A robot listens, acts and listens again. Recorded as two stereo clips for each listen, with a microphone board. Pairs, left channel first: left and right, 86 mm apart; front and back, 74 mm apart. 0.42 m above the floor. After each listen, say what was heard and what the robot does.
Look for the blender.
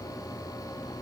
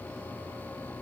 Keep listening.
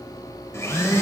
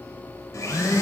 The blender: 35° left. Turn 35° left.
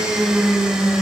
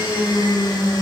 Facing the blender.